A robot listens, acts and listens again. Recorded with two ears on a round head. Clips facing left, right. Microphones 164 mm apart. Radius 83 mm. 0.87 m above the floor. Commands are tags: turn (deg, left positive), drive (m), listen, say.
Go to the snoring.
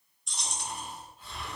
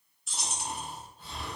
<turn deg="-35"/>
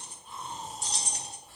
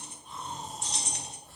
<drive m="1.0"/>
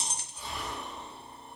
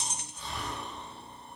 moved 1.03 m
<turn deg="10"/>
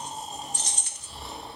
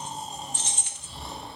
<drive m="1.0"/>
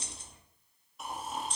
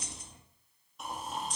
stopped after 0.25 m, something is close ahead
<say>Arrived at the snoring, straight ahead.</say>